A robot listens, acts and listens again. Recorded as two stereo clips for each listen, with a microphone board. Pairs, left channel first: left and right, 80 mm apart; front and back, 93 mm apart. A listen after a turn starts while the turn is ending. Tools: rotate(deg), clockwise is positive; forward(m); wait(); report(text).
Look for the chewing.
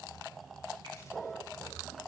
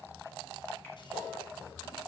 wait()
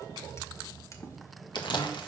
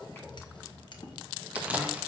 rotate(-105)
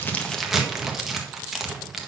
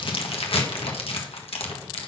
report("Found it: chewing, straight ahead.")